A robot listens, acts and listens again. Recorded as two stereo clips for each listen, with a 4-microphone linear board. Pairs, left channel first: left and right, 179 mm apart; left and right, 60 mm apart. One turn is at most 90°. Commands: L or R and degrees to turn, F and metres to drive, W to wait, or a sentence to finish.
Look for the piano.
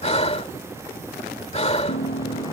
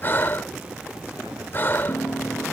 L90
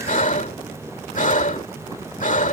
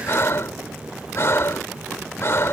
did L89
W
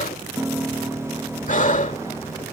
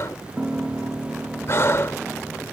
R10
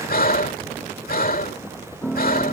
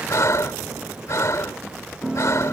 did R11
Found it: a piano, straight ahead.